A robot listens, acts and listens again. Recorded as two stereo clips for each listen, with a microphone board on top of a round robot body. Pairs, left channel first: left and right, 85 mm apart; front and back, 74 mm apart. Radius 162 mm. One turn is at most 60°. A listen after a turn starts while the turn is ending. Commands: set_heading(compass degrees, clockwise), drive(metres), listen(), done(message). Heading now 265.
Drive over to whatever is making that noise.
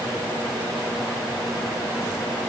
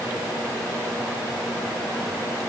listen()
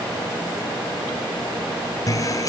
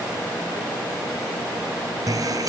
set_heading(205)
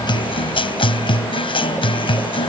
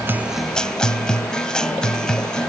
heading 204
set_heading(144)
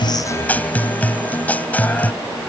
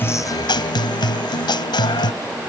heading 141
set_heading(121)
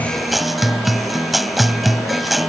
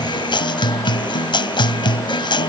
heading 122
drive(1.0)
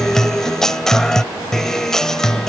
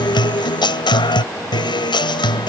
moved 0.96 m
drive(1.0)
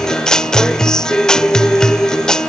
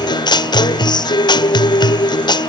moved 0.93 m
set_heading(112)
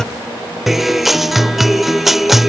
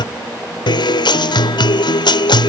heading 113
drive(1.0)
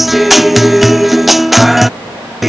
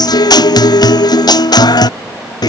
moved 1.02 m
drive(1.0)
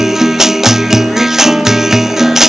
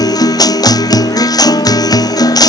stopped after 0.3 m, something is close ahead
done("Arrived at the guitar, straight ahead.")